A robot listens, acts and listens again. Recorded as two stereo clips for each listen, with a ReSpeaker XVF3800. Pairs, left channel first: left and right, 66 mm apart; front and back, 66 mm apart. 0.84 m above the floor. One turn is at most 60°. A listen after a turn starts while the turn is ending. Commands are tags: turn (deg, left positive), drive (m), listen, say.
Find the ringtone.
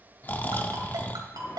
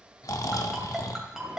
<turn deg="-60"/>
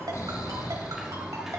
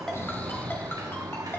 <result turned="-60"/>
<turn deg="-35"/>
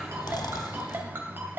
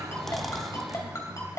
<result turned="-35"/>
<turn deg="-35"/>
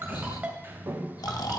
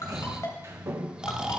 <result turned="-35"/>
<turn deg="-20"/>
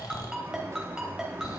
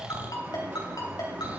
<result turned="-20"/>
<turn deg="-10"/>
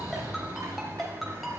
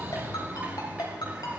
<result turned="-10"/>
<say>Facing the ringtone, 2 to 4 m away.</say>